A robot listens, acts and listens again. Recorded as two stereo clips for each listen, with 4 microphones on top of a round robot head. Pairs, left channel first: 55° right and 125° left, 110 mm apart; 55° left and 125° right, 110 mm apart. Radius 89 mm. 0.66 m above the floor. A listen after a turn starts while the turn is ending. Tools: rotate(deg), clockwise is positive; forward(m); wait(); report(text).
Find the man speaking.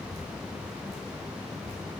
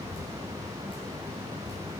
wait()
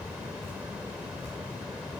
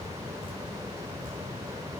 wait()
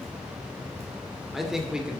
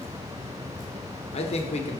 rotate(-45)
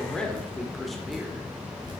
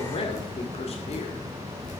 rotate(-35)
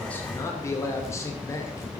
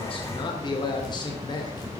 rotate(-10)
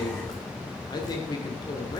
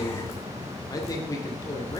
report("Facing the man speaking.")